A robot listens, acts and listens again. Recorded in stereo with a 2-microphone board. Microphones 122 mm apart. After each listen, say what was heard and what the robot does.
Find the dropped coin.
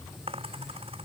The dropped coin: about 50° right or 130° right. Turn 50° right.
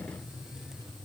Keep listening.
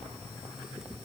I heard a dropped coin, but can't make it out now. It was about straight ahead or 80° right.